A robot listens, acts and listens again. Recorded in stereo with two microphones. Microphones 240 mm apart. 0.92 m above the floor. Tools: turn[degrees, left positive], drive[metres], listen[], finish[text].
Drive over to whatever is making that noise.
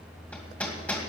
Action: turn[30]
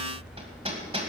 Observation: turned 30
Thought: So it is at 25° right.
Action: turn[-25]
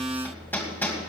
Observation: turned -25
Thought: The hammering is now 10° left.
Action: turn[10]
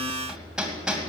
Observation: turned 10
Action: drive[1.0]
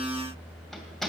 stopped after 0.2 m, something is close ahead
Action: finish[Something is in my way. I am facing the hammering but have not reached it.]